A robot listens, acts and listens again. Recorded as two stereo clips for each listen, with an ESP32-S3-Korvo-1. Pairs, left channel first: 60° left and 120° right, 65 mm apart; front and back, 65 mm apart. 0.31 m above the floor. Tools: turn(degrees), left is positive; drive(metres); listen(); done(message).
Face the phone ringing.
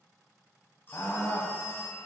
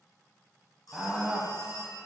done("Found it: a phone ringing, straight ahead, 2 to 4 m away.")